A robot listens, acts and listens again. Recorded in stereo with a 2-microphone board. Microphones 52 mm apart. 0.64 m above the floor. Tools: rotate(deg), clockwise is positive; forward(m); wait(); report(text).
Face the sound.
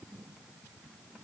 wait()
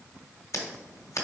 rotate(-70)
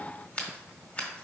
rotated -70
rotate(-30)
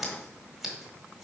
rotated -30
report("Facing the scissors.")